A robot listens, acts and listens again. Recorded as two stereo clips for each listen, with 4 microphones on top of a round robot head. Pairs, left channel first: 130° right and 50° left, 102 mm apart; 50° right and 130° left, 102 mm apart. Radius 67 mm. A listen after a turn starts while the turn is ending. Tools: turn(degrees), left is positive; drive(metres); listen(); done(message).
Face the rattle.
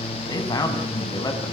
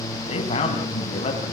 listen()
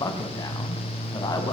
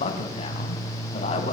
listen()
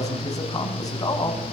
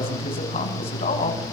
done("I can't make out a rattle to turn to.")